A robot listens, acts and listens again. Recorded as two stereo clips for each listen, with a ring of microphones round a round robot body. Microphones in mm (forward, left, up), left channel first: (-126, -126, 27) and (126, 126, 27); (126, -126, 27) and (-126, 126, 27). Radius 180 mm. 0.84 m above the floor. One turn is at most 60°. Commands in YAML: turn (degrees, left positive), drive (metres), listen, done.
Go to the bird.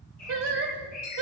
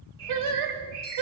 turn: 60
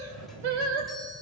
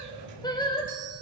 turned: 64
turn: 60
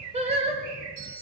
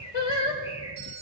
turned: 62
turn: 30
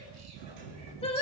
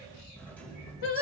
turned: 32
listen: true
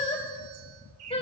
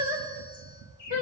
drive: 1.0
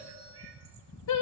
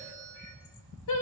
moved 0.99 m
listen: true
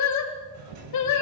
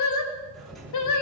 listen: true
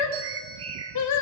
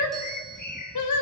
drive: 1.0
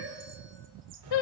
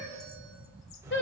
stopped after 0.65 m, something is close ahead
listen: true
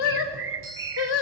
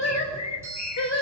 done: "Arrived at the bird, straight ahead."